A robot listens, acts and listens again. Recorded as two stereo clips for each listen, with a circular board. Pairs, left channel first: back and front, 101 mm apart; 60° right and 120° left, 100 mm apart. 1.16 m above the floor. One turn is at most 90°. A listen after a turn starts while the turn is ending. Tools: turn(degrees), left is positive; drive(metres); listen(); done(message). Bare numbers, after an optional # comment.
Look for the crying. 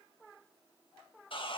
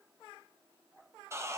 listen()
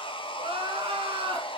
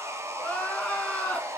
# The crying: 20° left.
turn(20)
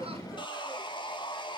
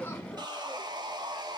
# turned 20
listen()
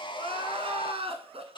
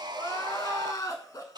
done("Facing the crying, 1 to 2 m away.")